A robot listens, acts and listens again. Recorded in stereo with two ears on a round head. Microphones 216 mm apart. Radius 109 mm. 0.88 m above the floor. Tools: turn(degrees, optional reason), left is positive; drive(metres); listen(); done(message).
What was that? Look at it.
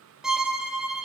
turn(degrees=-30)
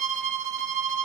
turn(degrees=-145, reason="So it is at 145° right.")
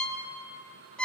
done("Facing the violin, 1 to 2 m away.")